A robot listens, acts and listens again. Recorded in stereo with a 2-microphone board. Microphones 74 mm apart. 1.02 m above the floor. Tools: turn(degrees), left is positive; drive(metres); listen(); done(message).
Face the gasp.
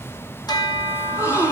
turn(degrees=40)
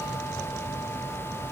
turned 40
listen()
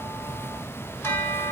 done("I heard a gasp, but can't make it out now. It was about straight ahead or 100° left.")